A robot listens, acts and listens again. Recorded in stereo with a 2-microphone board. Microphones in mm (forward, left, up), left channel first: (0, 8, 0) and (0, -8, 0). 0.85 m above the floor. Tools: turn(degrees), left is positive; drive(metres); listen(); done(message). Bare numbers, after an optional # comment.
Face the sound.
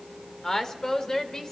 # The woman speaking: about 35° left or 145° left.
turn(35)
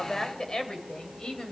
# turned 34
# So it is at 115° left.
turn(115)
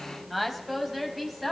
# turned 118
done("Facing the woman speaking, over 4 m away.")